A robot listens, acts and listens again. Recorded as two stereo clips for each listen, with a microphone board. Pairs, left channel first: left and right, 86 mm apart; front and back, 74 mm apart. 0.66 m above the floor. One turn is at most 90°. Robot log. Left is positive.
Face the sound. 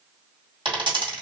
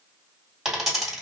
note: The dropped coin: 95° right.
cmd yaw -90
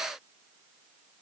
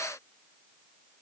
end: I heard a dropped coin from this way, but can't make it out now.